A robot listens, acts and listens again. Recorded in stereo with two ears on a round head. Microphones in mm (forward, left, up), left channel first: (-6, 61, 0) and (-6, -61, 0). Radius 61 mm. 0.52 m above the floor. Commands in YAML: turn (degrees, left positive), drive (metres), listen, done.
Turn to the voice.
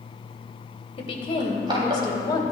turn: 30
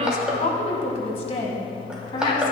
turn: 40
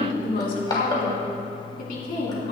turn: 110
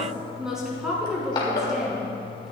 done: "Found it: a woman speaking, straight ahead."